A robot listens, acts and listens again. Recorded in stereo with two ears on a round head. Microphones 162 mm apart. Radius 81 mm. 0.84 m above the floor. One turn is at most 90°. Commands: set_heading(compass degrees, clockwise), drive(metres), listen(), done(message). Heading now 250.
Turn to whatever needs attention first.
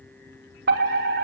set_heading(310)
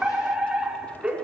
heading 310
done("Facing the fire alarm, over 4 m away.")